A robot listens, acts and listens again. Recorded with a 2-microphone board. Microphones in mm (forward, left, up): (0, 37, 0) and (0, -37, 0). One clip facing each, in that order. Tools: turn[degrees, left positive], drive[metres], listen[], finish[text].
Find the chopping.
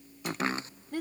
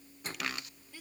Thought: The chopping: about 30° left or 150° left.
Action: turn[30]
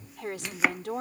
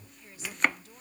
Action: finish[Facing the chopping.]